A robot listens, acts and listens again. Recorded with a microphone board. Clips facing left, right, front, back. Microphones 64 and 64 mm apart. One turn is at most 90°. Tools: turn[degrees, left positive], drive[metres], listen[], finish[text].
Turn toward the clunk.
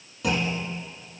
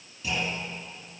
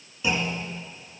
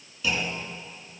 Thought: The clunk: 60° left.
Action: turn[60]
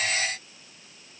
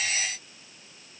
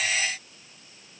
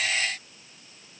Action: finish[Facing where the clunk came from. I can't hear it now.]